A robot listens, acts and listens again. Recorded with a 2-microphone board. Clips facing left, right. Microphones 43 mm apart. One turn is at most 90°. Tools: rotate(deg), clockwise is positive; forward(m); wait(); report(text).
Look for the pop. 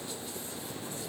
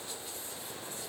wait()
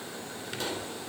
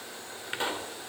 rotate(25)
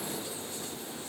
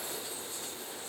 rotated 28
wait()
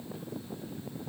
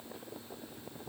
report("I heard a pop, but can't make it out now. It was about straight ahead or 125° right.")